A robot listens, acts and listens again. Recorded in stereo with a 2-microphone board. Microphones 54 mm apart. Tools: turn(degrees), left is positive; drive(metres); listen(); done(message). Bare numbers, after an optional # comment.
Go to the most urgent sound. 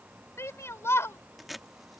# The shout: about 55° left or 125° left.
turn(55)
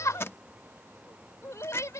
# So it is at 70° left.
turn(70)
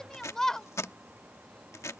# The shout is now 10° left.
turn(10)
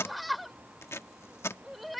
drive(1.0)
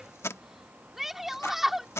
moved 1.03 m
drive(1.0)
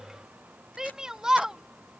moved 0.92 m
# The shout is now 10° right.
turn(-10)
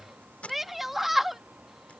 drive(1.0)
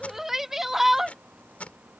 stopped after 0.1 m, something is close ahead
done("Arrived at the shout, straight ahead.")